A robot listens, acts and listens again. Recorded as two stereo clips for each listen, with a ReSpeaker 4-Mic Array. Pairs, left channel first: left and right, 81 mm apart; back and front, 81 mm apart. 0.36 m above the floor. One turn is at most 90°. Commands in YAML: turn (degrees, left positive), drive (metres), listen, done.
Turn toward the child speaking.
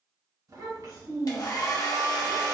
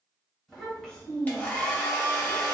turn: -90
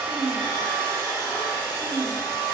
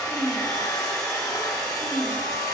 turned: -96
turn: -90
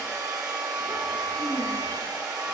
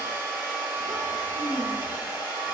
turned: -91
turn: -45
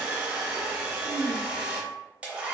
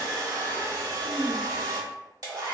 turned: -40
done: "Found it: a child speaking, straight ahead, 1 to 2 m away."